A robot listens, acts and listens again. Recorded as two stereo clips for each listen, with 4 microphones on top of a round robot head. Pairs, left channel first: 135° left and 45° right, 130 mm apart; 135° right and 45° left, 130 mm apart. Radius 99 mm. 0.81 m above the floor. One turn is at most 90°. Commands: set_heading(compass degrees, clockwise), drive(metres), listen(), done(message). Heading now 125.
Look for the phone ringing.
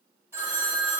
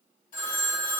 set_heading(215)
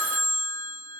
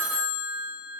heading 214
set_heading(249)
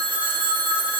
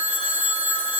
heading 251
done("Found it: a phone ringing, straight ahead.")